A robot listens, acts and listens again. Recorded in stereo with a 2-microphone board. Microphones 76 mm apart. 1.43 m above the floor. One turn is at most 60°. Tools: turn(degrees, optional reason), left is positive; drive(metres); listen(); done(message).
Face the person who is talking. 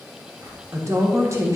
turn(degrees=-40, reason="The woman speaking: about 40° right or 140° right.")
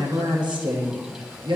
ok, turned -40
turn(degrees=-60, reason="So it is at 100° right.")
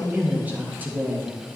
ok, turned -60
turn(degrees=-25, reason="The woman speaking is now 25° right.")
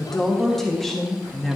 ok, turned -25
done("Facing the woman speaking, 1 to 2 m away.")